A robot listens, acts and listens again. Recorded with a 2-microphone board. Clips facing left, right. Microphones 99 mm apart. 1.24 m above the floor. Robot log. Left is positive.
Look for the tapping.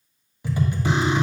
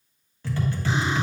note: The tapping: about 15° left or 165° left.
cmd yaw +15
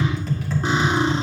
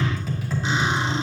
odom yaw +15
end: Found it: tapping, straight ahead.